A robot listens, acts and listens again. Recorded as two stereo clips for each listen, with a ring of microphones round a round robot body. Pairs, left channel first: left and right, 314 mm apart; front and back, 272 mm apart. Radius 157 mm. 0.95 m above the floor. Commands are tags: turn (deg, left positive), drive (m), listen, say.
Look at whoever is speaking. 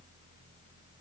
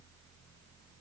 <listen/>
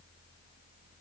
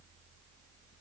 <listen/>
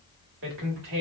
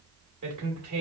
<turn deg="-145"/>
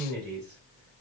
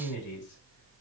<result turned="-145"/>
<turn deg="-30"/>
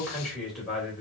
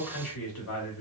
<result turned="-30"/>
<say>Facing the man speaking.</say>